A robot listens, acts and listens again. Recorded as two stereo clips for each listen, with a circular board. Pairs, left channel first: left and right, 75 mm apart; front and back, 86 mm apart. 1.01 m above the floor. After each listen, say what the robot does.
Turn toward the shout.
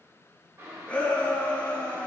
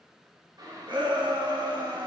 Turn 160° left.
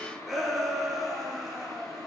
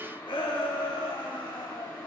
Found it: a shout, straight ahead.